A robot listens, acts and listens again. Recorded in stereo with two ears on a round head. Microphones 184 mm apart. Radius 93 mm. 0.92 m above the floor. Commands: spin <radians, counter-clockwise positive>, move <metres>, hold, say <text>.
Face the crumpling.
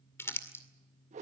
spin 0.52
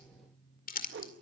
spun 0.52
spin 2.36
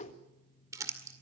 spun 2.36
spin -0.26
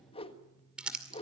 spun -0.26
say Facing the crumpling.